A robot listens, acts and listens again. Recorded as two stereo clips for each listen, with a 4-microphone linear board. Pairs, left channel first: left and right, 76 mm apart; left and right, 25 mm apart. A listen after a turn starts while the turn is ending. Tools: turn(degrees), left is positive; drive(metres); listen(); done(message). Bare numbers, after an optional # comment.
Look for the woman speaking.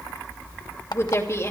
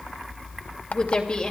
# The woman speaking: about 40° left or 140° left.
turn(40)
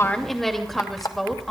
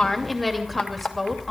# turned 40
done("Found it: a woman speaking, straight ahead.")